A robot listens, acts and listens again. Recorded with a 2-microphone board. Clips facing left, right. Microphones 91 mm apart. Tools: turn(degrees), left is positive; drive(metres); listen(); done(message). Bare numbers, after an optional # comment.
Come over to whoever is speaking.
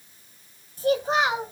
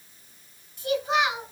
# The child speaking: about 35° left or 145° left.
turn(35)
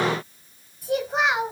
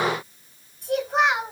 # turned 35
drive(1.0)
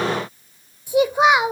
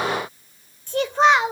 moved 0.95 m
# The child speaking is now 10° left.
turn(10)
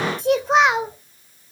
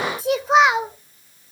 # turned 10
drive(1.0)
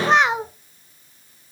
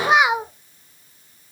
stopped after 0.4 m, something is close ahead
# The child speaking is now 10° right.
turn(-10)
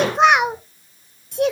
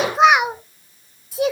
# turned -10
done("Arrived at the child speaking, straight ahead.")